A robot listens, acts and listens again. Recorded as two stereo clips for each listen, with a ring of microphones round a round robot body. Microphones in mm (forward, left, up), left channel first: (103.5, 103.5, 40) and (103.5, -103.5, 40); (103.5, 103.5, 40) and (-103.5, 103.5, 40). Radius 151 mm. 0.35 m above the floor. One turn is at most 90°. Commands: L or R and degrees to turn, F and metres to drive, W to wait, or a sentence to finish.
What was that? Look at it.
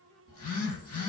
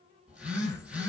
L90
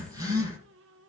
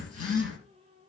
R15
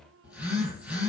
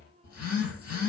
Found it: a phone buzzing, straight ahead.